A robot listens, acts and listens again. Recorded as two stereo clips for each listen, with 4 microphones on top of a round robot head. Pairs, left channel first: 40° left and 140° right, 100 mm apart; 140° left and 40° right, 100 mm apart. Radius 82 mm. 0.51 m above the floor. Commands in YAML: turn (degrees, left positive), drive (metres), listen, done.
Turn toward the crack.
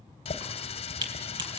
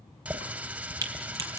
turn: -95
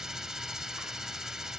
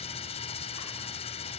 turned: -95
done: "I heard a crack from this way, but can't make it out now."